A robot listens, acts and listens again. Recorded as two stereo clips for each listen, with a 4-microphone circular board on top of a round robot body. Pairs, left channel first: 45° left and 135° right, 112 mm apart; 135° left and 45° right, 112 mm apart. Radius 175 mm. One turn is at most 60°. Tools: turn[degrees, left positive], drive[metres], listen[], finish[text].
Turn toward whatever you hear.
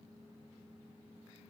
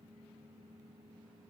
Action: listen[]
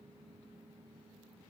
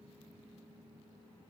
Action: listen[]
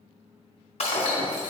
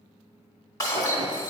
Thought: The breaking glass: 75° left.
Action: turn[60]
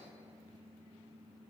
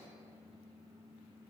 Thought: Nothing new. It was at 15° left.
Action: turn[15]
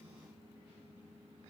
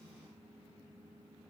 Action: finish[Facing where the breaking glass came from. I can't hear it now.]